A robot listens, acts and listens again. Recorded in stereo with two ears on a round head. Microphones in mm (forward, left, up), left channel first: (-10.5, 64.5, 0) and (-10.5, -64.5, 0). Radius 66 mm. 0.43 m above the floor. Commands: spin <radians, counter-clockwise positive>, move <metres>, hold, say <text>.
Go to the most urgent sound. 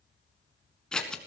hold
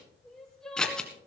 spin 0.52
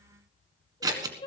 spin 2.53
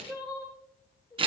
spin 0.52
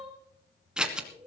move 1.0
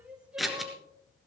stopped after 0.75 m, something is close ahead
spin -0.17
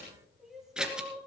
say Something is in my way. I am facing the crying but have not reached it.